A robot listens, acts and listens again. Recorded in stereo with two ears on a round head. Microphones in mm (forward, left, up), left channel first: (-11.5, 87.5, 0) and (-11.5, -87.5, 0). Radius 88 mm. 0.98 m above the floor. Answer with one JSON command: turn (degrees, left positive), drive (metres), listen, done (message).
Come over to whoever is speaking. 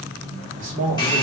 {"turn": -35}
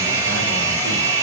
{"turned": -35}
{"listen": true}
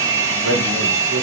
{"listen": true}
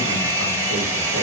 {"done": "I heard a man speaking, but can't make it out now. It was about straight ahead or 110° right. I did not reach it."}